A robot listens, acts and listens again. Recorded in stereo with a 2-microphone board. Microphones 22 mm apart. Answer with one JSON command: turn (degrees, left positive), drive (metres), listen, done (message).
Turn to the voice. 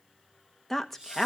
{"turn": 30}
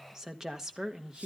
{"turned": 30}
{"turn": -25}
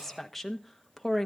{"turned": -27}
{"done": "Found it: a woman speaking, straight ahead, 1 to 2 m away."}